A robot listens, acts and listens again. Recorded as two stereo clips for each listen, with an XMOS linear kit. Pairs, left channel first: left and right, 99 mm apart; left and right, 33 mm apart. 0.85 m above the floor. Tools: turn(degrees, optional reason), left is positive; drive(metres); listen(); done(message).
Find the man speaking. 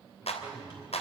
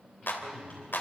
turn(degrees=-45, reason="The man speaking: about 45° right or 135° right.")
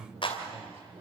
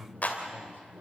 turn(degrees=-105, reason="So it is at 105° right.")
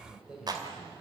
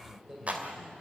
turn(degrees=-10, reason="The man speaking is now 10° right.")
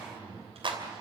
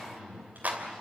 done("Found it: a man speaking, straight ahead.")